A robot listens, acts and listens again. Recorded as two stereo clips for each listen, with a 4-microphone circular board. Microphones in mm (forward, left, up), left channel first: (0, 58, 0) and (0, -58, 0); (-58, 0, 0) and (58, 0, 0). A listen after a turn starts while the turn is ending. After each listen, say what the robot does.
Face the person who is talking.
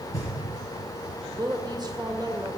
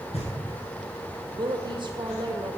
Turn 40° right.
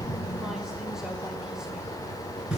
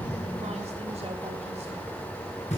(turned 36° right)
Keep listening.
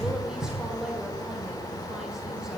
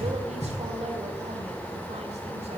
Found it: a woman speaking, straight ahead, 1 to 2 m away.